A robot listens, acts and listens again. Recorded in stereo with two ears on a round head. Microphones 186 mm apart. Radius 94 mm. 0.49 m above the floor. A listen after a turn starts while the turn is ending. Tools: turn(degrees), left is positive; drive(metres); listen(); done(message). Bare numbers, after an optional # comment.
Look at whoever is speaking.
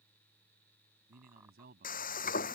# The man speaking: about 45° right or 135° right.
turn(-45)
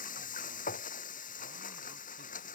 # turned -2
listen()
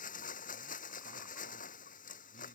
# The man speaking: about 45° right or 135° right.
turn(-45)
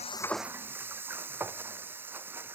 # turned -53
listen()
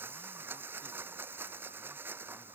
listen()
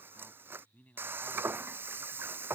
# So it is at 10° left.
turn(10)
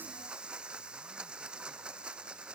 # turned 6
listen()
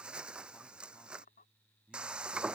done("Facing the man speaking.")